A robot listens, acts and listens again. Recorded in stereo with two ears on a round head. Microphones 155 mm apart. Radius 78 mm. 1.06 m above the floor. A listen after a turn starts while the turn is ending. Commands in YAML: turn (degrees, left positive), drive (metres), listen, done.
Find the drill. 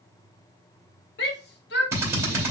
turn: -15
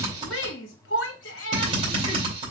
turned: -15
turn: -150
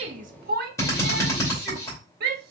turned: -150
turn: 20
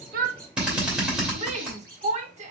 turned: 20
done: "Facing the drill, 2 to 4 m away."